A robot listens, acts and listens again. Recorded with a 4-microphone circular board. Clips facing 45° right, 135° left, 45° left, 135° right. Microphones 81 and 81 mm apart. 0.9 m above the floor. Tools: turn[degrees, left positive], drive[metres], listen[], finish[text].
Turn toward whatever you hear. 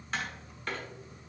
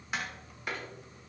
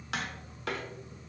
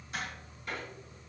Thought: The tapping: 55° left.
Action: turn[55]
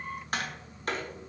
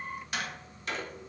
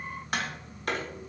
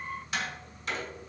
Action: finish[Facing the tapping.]